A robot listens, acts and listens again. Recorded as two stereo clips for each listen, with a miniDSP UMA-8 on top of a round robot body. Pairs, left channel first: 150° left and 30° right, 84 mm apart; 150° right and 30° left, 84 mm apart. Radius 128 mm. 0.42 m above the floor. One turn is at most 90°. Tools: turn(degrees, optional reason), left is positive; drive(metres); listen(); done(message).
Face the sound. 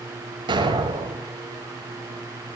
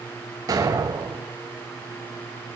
turn(degrees=-15, reason="The explosion: 15° right.")
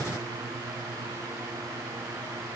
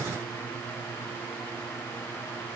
done("Facing where the explosion came from. I can't hear it now.")